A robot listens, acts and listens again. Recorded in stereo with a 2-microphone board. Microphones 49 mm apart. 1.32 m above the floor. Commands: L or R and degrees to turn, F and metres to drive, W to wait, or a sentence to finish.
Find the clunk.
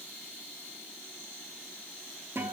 W
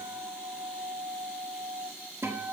W
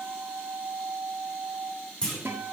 L15
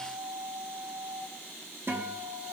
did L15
W
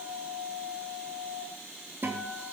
I heard a clunk, but can't make it out now. It was about straight ahead or 150° left.